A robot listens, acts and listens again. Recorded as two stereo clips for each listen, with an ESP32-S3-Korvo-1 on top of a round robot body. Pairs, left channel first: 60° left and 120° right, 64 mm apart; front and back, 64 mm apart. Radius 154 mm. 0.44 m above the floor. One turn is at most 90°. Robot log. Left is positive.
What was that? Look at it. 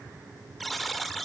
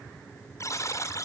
note: The buzzer: 25° right.
cmd yaw -25
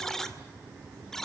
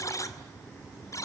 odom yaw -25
note: The buzzer is now 20° right.
cmd yaw -20
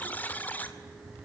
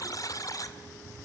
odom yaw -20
end: Facing the buzzer, 2 to 4 m away.